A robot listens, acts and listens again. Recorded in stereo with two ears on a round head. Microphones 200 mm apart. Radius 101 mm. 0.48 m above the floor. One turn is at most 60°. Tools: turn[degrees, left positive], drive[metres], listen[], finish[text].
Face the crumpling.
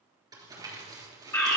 Thought: The crumpling: about 15° right or 165° right.
Action: turn[-15]
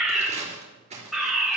Thought: So it is at 150° right.
Action: turn[-60]
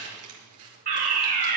Thought: The crumpling is now 95° right.
Action: turn[-60]
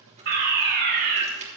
Thought: The crumpling is now 30° right.
Action: turn[-30]
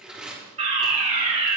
Action: finish[Facing the crumpling.]